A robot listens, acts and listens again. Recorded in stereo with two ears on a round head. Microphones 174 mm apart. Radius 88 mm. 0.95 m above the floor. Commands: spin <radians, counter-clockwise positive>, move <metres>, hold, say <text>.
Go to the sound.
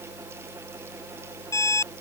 spin 0.26
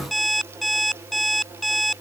move 1.0
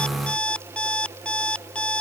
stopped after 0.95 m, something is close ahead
say Blocked. The alarm clock is further on, straight ahead.